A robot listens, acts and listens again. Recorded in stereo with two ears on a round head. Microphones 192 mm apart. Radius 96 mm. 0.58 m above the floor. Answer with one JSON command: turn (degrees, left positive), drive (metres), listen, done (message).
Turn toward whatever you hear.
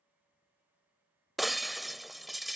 {"turn": 30}
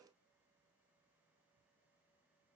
{"listen": true}
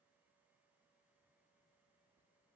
{"done": "I heard breaking glass, but can't make it out now. It was about 30° right or 150° left."}